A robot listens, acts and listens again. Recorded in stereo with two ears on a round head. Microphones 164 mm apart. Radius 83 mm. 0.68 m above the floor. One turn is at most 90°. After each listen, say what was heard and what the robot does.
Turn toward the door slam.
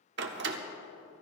The door slam: about 70° right or 110° right. Turn 70° right.
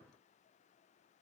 Keep listening.
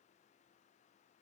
I heard a door slam, but can't make it out now. It was about straight ahead or 40° right.